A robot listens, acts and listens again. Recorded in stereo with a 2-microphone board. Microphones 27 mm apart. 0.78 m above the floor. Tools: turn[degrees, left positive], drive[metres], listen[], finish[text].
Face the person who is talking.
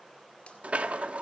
Action: listen[]
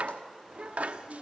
Thought: The child speaking: about 25° right or 155° right.
Action: turn[-25]
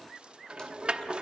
Action: listen[]
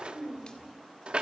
Thought: The child speaking: about 20° right or 160° right.
Action: turn[-20]
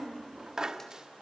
Thought: The child speaking: about 30° right or 150° right.
Action: turn[-30]
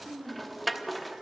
Thought: So it is at 130° right.
Action: turn[-130]
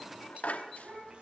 Thought: The child speaking is now 40° right.
Action: turn[-40]
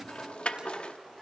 Action: listen[]
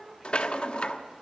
Action: finish[Facing the child speaking, 2 to 4 m away.]